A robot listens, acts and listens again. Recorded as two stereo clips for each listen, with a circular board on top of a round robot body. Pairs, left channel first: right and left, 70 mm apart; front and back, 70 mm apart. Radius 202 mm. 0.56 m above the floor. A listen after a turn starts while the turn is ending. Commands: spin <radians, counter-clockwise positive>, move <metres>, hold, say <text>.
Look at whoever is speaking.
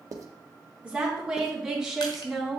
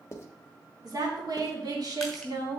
spin 3.14
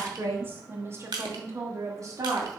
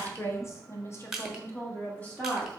spin 1.22
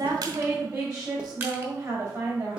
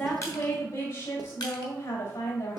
spin 0.35
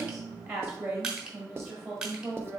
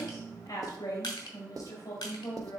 say Found it: a woman speaking, straight ahead, 2 to 4 m away.